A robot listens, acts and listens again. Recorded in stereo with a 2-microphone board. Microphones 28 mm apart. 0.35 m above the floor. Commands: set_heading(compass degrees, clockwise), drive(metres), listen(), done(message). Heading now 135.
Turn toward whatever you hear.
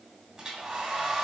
set_heading(155)
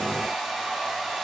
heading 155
done("Facing the hair dryer, 2 to 4 m away.")